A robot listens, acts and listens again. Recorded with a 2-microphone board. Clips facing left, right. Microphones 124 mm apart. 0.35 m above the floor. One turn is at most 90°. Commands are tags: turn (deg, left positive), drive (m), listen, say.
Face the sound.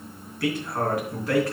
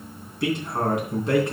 <turn deg="-20"/>
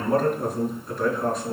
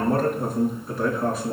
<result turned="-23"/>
<say>Facing the man speaking, 2 to 4 m away.</say>